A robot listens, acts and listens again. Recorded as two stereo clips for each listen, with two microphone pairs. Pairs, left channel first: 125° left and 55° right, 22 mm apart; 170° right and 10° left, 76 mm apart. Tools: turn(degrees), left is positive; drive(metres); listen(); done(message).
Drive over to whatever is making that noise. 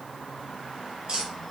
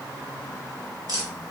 turn(degrees=-15)
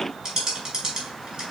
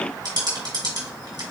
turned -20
drive(metres=1.0)
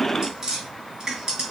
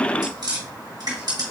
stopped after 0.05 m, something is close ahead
done("Something is in my way. I am facing the tapping but have not reached it.")